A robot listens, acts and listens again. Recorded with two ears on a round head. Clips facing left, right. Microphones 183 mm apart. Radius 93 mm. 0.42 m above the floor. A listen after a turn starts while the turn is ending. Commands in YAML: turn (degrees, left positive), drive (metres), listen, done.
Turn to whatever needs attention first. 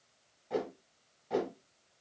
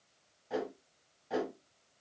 listen: true
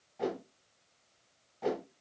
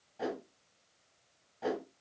listen: true
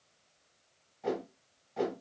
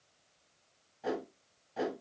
done: "I can't make out anything urgent to turn to."